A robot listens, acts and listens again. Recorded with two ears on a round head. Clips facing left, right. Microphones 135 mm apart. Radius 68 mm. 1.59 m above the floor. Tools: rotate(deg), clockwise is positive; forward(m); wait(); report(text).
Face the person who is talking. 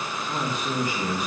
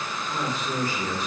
rotate(-15)
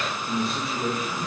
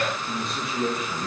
report("Found it: a man speaking, straight ahead, 2 to 4 m away.")